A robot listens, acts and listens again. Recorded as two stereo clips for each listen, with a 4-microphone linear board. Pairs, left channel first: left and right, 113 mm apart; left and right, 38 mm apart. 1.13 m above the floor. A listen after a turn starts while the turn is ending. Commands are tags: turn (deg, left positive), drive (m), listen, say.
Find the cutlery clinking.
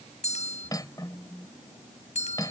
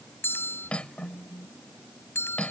<turn deg="35"/>
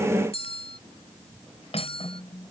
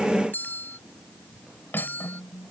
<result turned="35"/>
<turn deg="110"/>
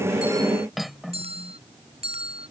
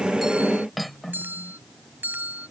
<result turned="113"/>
<say>Found it: cutlery clinking, straight ahead.</say>